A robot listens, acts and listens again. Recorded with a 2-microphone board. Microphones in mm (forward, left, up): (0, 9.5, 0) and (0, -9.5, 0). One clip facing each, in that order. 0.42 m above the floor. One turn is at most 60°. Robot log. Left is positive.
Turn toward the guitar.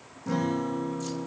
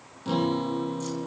note: The guitar: about 65° right or 115° right.
cmd yaw -60
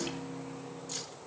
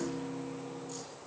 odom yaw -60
note: So it is at 60° right.
cmd yaw -60
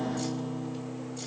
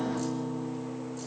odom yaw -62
end: Found it: a guitar, straight ahead, 2 to 4 m away.